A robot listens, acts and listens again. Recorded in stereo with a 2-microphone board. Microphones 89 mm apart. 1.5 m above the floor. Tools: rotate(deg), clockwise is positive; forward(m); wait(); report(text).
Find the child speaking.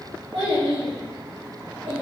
rotate(75)
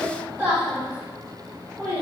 rotate(20)
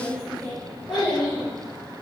report("Found it: a child speaking, straight ahead, 2 to 4 m away.")